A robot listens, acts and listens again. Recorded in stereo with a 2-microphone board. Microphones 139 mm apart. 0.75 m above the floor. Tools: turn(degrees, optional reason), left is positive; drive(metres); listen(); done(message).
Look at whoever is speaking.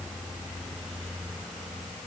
listen()
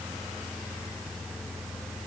listen()
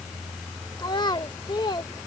turn(degrees=35, reason="The child speaking: about 35° left or 145° left.")
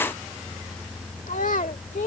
turn(degrees=110, reason="So it is at 110° left.")
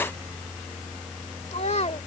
turn(degrees=50, reason="The child speaking is now 50° left.")
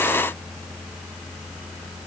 listen()
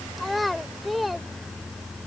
done("Found it: a child speaking, straight ahead.")